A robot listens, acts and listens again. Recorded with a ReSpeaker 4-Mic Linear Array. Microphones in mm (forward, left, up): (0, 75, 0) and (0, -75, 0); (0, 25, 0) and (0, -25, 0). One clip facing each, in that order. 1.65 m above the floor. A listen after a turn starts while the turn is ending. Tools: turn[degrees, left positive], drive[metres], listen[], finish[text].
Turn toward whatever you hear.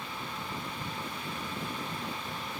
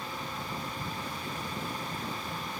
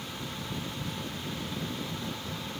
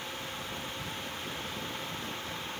Action: listen[]
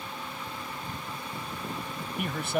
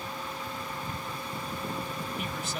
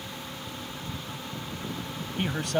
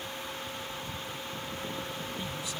Thought: The man speaking: about 60° left or 120° left.
Action: turn[60]
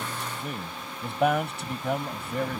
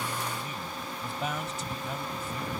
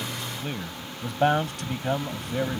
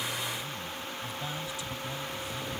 Thought: So it is at 65° left.
Action: turn[65]
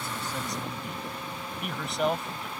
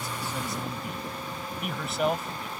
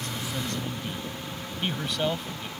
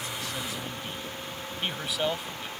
Action: finish[Facing the man speaking.]